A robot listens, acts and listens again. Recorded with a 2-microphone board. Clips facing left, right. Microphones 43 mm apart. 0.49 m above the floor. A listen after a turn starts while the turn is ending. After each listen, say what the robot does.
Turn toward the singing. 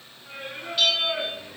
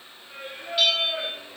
Turn 90° left.
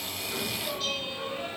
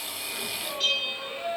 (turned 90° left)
Turn 15° left.
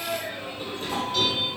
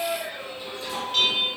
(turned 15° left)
Turn 20° left.
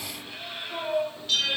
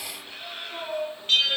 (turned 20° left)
Turn 15° left.
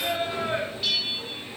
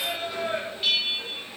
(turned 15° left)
Turn 15° left.
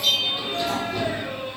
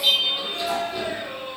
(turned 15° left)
Facing the singing.